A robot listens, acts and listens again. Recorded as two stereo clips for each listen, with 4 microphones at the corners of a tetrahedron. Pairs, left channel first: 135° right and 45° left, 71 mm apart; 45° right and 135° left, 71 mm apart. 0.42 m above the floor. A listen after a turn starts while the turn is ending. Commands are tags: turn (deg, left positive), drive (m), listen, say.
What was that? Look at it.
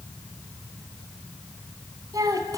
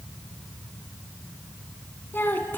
<turn deg="15"/>
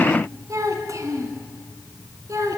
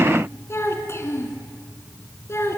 <say>Found it: a child speaking, straight ahead, 2 to 4 m away.</say>